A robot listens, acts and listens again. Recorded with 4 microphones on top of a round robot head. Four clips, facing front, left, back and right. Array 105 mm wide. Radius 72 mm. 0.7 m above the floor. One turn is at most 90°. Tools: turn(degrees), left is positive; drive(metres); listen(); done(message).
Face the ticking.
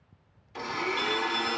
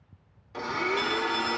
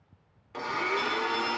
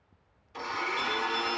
listen()
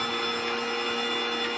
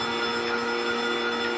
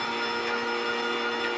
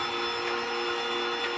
listen()
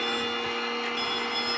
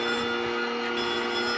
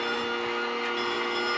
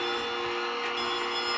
done("I can't make out ticking to turn to.")